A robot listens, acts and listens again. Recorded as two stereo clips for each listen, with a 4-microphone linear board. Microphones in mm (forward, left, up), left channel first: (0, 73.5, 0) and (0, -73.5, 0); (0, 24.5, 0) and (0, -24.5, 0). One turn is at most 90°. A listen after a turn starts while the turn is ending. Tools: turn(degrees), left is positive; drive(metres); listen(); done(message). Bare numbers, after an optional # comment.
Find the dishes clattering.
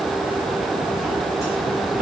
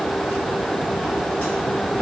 listen()
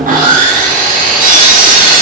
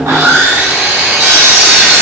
listen()
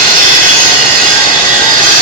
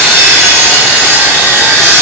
done("I can't make out dishes clattering, only sawing.")